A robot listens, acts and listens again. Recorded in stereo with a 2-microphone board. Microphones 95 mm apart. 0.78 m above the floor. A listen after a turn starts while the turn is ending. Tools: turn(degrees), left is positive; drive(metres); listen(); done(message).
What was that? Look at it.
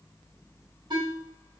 turn(degrees=-50)
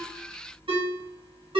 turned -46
turn(degrees=-80)
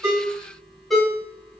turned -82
done("Facing the ringtone.")